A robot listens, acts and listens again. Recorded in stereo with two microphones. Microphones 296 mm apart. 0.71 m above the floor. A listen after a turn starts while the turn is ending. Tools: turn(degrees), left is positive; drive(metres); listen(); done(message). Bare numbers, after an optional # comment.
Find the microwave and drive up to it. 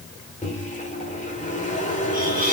# The microwave: about 25° left or 155° left.
turn(25)
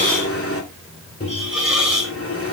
# So it is at 130° left.
turn(130)
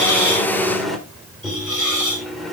drive(1.0)
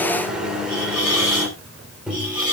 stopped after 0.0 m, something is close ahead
done("Something is in my way. I am facing the microwave but have not reached it.")